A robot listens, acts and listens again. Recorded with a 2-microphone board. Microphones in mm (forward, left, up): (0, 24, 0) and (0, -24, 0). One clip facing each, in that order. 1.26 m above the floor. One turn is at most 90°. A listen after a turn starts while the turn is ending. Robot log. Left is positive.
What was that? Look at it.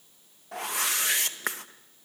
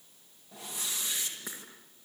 note: The whoosh: about 70° left or 110° left.
cmd yaw +70
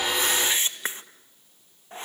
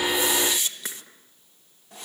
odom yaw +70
note: So it is at 35° left.
cmd yaw +35
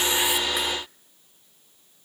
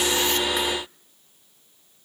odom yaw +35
cmd idle
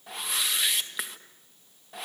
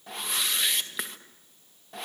end: Facing the whoosh.